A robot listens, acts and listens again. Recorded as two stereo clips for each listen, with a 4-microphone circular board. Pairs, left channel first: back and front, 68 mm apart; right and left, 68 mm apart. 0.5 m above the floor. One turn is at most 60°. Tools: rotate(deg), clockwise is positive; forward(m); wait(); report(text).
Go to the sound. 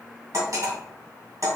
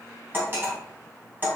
rotate(-35)
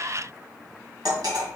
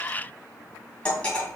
rotate(15)
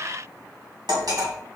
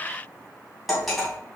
forward(1.0)
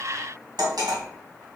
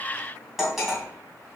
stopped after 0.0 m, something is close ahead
report("Blocked. The cutlery clinking is further on, straight ahead.")